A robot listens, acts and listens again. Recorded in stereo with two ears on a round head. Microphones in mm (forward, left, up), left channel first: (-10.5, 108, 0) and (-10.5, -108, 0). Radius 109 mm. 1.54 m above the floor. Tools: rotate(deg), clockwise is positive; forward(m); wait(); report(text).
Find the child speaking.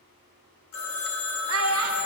rotate(65)
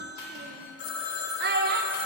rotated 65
rotate(45)
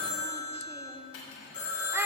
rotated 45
rotate(10)
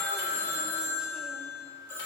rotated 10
wait()
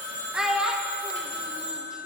report("Found it: a child speaking, straight ahead, 1 to 2 m away.")